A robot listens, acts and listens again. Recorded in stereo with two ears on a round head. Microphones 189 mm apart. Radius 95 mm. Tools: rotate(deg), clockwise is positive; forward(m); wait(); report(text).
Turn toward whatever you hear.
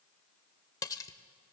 rotate(-15)
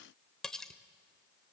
report("Facing the cutlery clinking, under 1 m away.")